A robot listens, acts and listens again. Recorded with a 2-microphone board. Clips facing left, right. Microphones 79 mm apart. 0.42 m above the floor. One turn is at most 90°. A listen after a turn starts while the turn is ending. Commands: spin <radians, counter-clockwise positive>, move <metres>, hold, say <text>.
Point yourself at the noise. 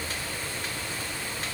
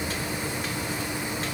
hold
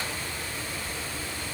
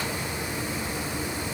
hold
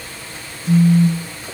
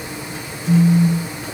spin 1.22
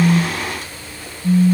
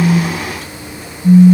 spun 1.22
say Found it: a phone buzzing, straight ahead.